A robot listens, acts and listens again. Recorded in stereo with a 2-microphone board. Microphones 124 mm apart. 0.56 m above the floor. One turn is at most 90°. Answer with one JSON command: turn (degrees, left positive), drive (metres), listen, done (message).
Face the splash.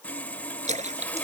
{"turn": -75}
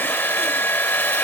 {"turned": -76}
{"listen": true}
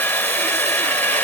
{"done": "I heard a splash, but can't make it out now. It was about 5° left or 30° right."}